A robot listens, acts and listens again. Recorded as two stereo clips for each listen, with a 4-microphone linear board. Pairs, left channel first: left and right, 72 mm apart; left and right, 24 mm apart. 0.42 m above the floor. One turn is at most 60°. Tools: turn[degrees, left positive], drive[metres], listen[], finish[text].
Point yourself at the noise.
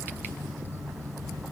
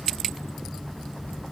Action: listen[]
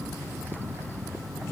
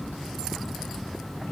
Action: listen[]
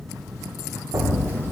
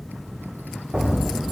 Thought: The explosion: about 40° right or 140° right.
Action: turn[-40]
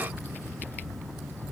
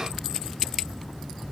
Action: listen[]
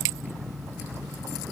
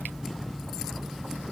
Action: finish[I heard an explosion, but can't make it out now. It was about straight ahead or 100° right.]